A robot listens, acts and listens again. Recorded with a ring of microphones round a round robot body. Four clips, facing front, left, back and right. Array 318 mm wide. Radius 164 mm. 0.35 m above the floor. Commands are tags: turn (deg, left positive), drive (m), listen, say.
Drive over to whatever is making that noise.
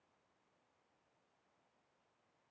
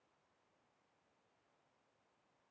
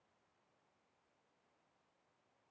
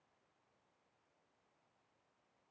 <listen/>
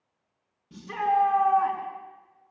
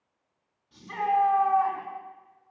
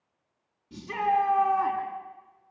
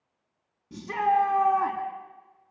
<turn deg="-75"/>
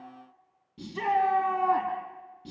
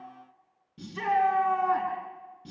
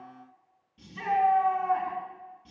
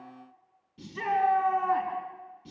<turn deg="25"/>
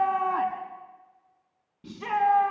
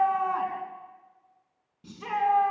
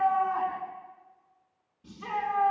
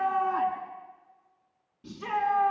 <drive m="1.0"/>
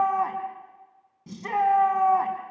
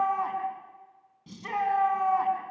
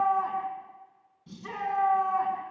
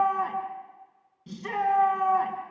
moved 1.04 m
<turn deg="-15"/>
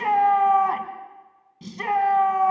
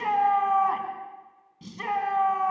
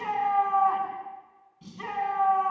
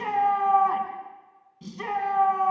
<drive m="1.0"/>
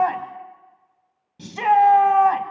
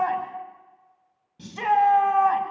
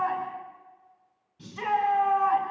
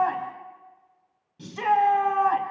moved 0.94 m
<drive m="1.0"/>
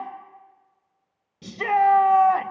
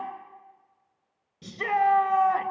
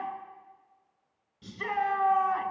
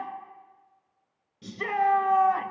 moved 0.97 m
<drive m="1.0"/>
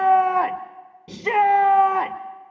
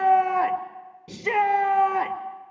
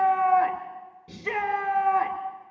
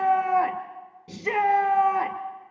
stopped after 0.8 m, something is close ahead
<say>I am next to the shout.</say>